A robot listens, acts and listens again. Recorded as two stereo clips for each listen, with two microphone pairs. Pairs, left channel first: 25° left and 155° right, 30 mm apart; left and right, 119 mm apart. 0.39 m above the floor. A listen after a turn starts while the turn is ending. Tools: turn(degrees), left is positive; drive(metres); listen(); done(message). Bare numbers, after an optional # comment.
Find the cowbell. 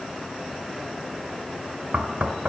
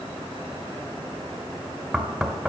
listen()
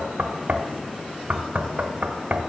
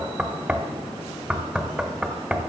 listen()
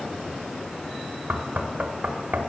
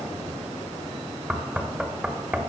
done("I can't make out a cowbell, only knocking.")